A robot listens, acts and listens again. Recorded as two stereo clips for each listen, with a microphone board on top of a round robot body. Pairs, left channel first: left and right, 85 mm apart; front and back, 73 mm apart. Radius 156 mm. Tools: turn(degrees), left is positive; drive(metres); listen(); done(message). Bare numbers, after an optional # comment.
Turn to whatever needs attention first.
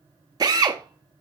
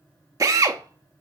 listen()
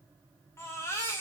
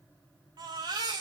# The baby crying: 150° left.
turn(150)
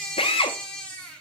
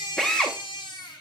# The baby crying is now 10° left.
turn(10)
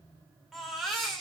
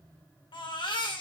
done("Found it: a baby crying, straight ahead.")